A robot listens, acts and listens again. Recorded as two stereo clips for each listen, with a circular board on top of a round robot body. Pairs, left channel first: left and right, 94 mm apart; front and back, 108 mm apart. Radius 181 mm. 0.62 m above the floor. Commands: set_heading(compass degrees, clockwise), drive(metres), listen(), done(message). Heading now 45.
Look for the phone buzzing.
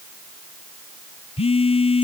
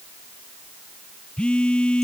set_heading(325)
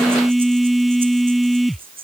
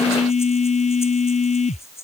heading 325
done("Facing the phone buzzing.")